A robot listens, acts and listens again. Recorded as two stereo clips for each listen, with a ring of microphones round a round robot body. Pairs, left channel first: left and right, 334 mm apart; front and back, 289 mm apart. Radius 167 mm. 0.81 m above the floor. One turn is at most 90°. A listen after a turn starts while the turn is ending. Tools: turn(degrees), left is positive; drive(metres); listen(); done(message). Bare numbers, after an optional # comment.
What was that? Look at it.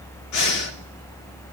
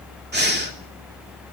# The breathing: 125° left.
turn(90)
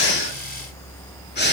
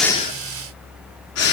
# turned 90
# The breathing is now 30° left.
turn(30)
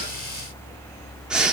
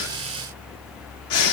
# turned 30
done("Facing the breathing, 2 to 4 m away.")